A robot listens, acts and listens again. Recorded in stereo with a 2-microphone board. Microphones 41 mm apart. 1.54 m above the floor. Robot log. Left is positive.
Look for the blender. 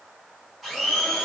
cmd yaw +30
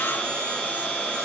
note: So it is at 150° left.
cmd yaw +150
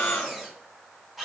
end: Facing the blender, 2 to 4 m away.